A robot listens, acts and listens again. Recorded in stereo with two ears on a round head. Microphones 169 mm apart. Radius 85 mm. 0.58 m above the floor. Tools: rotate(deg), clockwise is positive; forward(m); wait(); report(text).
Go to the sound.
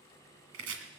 rotate(90)
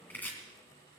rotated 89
rotate(-10)
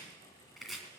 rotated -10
forward(1.0)
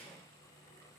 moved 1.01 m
wait()
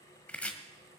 forward(1.0)
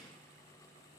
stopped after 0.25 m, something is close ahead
wait()
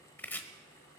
rotate(-10)
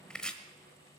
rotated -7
report("I am next to the chopping.")